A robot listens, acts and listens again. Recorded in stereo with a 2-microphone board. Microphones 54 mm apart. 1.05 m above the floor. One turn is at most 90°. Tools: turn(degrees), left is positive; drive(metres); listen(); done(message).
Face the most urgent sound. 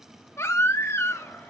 turn(degrees=55)
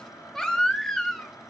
turn(degrees=10)
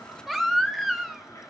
done("Facing the baby crying, 1 to 2 m away.")